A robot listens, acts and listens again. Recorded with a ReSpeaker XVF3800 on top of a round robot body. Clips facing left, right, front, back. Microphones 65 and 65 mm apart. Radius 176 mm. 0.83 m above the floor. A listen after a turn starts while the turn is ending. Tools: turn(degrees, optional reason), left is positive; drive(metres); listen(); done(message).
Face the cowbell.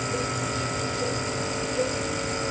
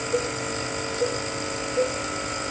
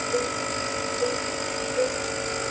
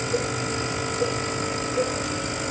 turn(degrees=-95, reason="The cowbell: 95° right.")
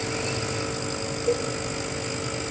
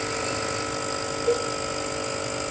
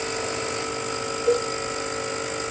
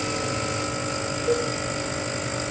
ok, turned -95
turn(degrees=-15, reason="The cowbell is now 15° right.")
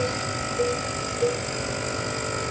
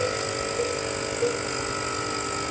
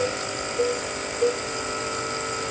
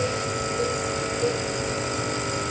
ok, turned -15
done("Facing the cowbell, 2 to 4 m away.")